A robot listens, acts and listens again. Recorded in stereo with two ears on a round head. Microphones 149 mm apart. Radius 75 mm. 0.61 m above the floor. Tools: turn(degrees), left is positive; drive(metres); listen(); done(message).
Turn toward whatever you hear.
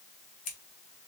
turn(degrees=45)
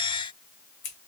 turn(degrees=85)
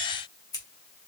turn(degrees=25)
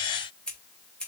done("Facing the scissors, 1 to 2 m away.")